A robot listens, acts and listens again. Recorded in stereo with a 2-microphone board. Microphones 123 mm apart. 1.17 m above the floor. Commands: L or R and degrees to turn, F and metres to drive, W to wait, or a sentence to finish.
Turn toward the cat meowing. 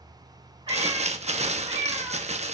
R40
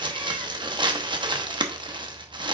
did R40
W
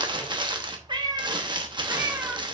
R15
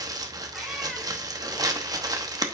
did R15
W
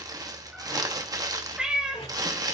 Found it: a cat meowing, straight ahead, 1 to 2 m away.